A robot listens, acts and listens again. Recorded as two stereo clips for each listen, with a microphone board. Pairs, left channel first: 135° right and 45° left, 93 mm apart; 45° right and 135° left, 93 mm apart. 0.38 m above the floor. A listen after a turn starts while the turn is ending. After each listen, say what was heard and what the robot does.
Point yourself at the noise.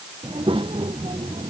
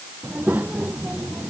The child speaking: 65° left. Turn 65° left.
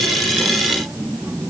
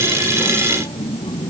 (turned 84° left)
The child speaking is now 30° right. Turn 30° right.
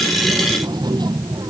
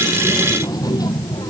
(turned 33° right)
Found it: a child speaking, straight ahead.